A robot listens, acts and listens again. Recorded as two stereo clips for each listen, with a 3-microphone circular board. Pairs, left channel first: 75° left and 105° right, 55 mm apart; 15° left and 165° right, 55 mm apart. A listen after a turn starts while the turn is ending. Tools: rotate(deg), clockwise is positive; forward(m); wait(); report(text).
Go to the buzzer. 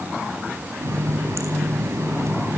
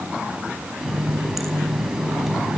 wait()
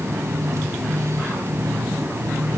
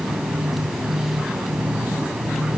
wait()
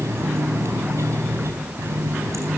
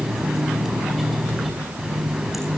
report("I can't make out a buzzer, only a running tap.")